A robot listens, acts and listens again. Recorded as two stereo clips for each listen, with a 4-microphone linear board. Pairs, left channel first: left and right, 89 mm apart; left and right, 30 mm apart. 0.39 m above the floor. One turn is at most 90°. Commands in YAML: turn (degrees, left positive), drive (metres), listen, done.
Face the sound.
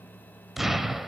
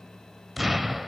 turn: -30
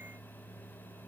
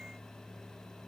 listen: true
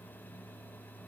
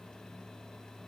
done: "I heard an explosion, but can't make it out now. It was about 25° left or 145° right."